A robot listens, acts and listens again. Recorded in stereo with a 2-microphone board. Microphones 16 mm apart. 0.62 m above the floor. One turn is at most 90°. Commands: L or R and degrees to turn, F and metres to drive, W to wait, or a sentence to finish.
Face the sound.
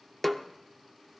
L15
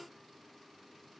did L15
W
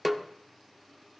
Found it: a snare drum, straight ahead.